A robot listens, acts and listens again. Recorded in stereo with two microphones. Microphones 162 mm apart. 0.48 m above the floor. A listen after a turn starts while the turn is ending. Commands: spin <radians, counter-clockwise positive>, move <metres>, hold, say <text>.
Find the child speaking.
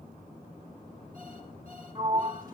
hold
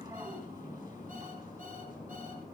hold
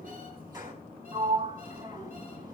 say I can't make out a child speaking, only a sliding door.